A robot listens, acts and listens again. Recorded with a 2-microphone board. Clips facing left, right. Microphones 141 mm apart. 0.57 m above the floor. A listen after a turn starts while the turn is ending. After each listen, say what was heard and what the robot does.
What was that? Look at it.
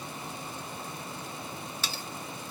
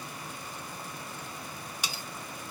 Turn 30° right.
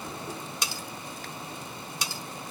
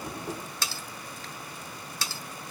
So it is at 15° left. Turn 15° left.
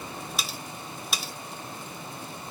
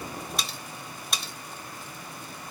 Facing the cutlery clinking.